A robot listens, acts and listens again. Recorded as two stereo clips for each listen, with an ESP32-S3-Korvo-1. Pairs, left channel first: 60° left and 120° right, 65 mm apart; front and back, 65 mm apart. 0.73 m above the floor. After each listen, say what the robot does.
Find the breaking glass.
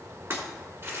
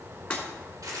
Turn 75° right.
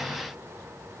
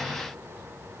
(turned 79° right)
I heard breaking glass from this way, but can't make it out now.